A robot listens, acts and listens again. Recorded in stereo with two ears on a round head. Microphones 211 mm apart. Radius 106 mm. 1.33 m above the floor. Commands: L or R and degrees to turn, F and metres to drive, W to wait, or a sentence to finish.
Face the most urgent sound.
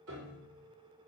W
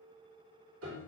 W
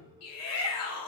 L70
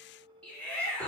Found it: a shout, straight ahead.